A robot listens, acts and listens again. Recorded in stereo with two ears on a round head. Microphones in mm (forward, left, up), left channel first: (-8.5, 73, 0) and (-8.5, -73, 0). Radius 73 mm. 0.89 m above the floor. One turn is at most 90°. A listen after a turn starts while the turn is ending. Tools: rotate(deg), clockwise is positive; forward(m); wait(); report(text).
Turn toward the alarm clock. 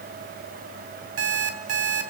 rotate(90)
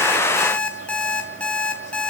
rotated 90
report("Found it: an alarm clock, straight ahead, 2 to 4 m away.")